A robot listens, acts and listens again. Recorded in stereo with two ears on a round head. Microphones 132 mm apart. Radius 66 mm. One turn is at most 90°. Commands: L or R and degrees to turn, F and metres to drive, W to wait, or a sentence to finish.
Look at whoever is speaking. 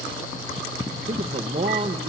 R40
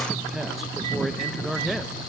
Found it: a man speaking, straight ahead.